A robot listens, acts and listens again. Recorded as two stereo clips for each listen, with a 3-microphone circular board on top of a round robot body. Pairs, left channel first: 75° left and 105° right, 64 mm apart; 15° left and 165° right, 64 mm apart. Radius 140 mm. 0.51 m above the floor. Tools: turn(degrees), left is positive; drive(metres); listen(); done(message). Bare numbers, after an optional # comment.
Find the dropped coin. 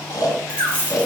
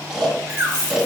# The dropped coin: 35° right.
turn(-35)
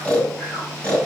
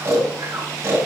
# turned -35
done("I heard a dropped coin from this way, but can't make it out now.")